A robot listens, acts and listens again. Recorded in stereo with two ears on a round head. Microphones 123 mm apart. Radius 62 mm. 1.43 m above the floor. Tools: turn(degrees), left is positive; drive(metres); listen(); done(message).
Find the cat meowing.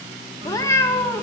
turn(degrees=30)
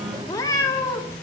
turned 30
turn(degrees=20)
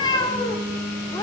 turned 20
turn(degrees=25)
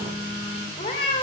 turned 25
turn(degrees=140)
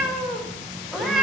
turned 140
done("Found it: a cat meowing, straight ahead, 2 to 4 m away.")